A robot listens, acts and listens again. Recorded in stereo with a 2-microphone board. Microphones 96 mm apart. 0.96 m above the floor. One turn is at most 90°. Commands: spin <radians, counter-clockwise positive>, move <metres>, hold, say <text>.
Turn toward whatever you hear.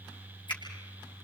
spin 0.96
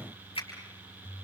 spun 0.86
spin 1.31
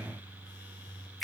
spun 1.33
say Found it: a finger snap, straight ahead, over 4 m away.